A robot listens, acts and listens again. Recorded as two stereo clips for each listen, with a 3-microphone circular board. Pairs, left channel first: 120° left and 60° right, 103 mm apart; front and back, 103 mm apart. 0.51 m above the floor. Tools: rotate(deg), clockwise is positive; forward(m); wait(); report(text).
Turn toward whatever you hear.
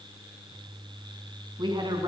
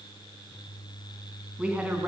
rotate(105)
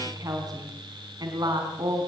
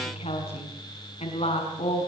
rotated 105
rotate(10)
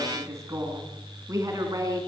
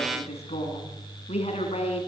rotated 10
report("Found it: a woman speaking, straight ahead, over 4 m away.")